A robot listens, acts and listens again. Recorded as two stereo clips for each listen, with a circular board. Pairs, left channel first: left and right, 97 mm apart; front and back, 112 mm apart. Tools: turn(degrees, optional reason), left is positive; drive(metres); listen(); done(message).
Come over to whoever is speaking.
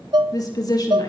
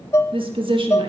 turn(degrees=140, reason="The woman speaking: 140° left.")
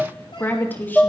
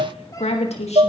turn(degrees=20, reason="The woman speaking is now 20° left.")
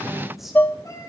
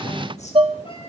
listen()
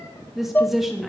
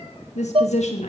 drive(metres=1.0)
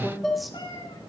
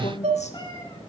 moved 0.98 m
drive(metres=1.0)
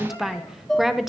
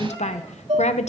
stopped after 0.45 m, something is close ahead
done("I am next to the woman speaking.")